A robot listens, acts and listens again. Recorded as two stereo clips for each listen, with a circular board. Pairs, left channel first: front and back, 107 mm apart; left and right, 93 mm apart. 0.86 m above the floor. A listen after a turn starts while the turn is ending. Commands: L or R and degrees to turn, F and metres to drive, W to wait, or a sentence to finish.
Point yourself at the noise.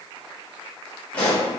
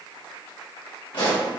L75
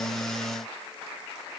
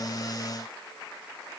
Facing where the pop came from. I can't hear it now.